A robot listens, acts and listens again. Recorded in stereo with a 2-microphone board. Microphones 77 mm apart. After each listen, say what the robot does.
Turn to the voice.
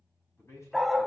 Turn 40° left.
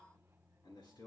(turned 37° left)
Turn 105° left.
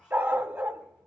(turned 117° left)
Turn 15° right.
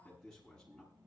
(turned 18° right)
Turn 10° left.
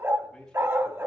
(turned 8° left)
Found it: a man speaking, straight ahead.